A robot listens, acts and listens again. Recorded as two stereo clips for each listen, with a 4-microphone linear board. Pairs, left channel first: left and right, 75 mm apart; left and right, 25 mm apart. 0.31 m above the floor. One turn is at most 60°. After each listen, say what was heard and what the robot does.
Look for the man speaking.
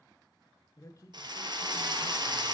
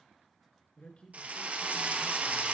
The man speaking: about 45° left or 135° left. Turn 45° left.
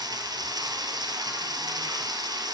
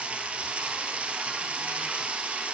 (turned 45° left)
Keep listening.
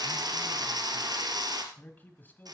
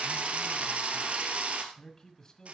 So it is at 25° left. Turn 25° left.
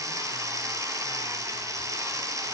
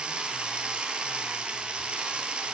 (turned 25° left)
Keep listening.
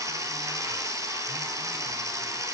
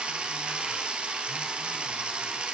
Keep listening.
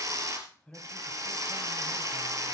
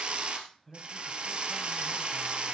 The man speaking is now 15° left. Turn 15° left.
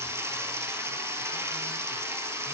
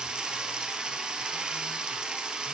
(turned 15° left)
Keep listening.
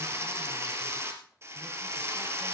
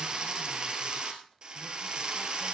Keep listening.
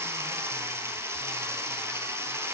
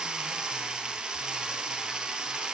Facing where the man speaking came from. I can't hear it now.